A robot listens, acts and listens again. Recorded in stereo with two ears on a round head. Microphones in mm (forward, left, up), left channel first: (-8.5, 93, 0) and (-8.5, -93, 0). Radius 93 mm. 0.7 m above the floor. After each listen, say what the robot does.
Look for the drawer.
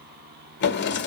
Turn 55° left.
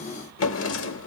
Turn 65° left.
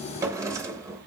Turn 15° right.
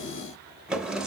Facing the drawer, 1 to 2 m away.